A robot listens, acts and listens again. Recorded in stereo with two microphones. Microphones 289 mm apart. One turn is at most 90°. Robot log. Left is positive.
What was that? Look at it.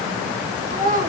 note: The child speaking: about 30° right or 150° right.
cmd yaw -30
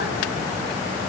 cmd idle
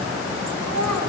note: So it is at 105° right.
cmd yaw -90
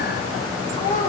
note: The child speaking is now 30° left.
cmd yaw +30
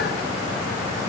cmd idle
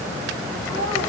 note: The child speaking is now 15° left.
cmd yaw +15
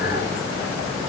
cmd idle
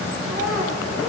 end: Facing the child speaking.